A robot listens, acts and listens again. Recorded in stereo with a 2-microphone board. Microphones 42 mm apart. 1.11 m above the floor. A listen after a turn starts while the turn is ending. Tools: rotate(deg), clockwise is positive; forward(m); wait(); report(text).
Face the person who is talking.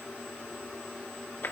wait()
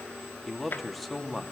rotate(-30)
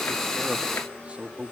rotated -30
rotate(30)
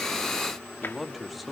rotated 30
report("Found it: a man speaking, straight ahead.")